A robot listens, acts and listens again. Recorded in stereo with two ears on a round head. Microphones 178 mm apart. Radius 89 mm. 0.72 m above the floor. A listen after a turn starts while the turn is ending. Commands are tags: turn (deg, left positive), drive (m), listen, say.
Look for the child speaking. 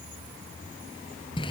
<listen/>
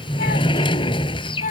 <turn deg="40"/>
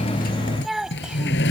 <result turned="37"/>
<say>Found it: a child speaking, straight ahead.</say>